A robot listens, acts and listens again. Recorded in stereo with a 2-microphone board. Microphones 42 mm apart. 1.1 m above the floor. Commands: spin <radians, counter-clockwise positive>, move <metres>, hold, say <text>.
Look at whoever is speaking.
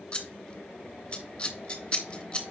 hold
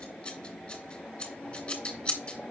hold
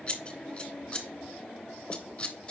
say I can't make out anyone speaking to turn to.